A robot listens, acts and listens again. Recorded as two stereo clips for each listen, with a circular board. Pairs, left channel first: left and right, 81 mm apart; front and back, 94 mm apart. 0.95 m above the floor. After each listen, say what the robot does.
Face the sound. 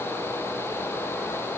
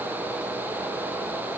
Keep listening.
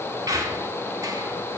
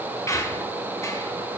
Turn 55° right.
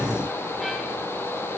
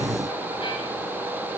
Keep listening.
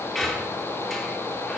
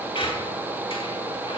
Facing the squeak, 1 to 2 m away.